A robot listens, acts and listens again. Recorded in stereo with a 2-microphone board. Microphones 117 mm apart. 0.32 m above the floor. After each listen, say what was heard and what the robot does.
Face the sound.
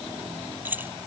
The keys jangling: about 15° right or 165° right. Turn 15° right.
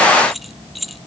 Turn 30° left.
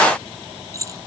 So it is at 30° right. Turn 30° right.
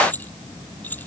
The keys jangling is now 15° left. Turn 15° left.
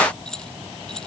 Facing the keys jangling.